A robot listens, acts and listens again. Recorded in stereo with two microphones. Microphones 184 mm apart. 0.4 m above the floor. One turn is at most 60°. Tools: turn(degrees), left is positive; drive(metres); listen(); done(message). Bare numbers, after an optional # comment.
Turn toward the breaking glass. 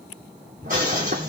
# The breaking glass: about 50° right or 130° right.
turn(-50)
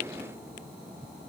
listen()
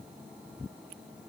done("I heard breaking glass, but can't make it out now. It was about straight ahead or 80° right.")